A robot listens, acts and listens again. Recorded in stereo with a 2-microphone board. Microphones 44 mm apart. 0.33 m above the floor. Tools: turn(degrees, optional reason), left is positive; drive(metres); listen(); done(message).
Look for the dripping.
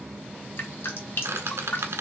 turn(degrees=60, reason="The dripping: about 60° left or 120° left.")
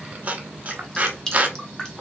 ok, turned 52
turn(degrees=15, reason="So it is at 15° left.")
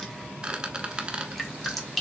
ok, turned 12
done("Facing the dripping.")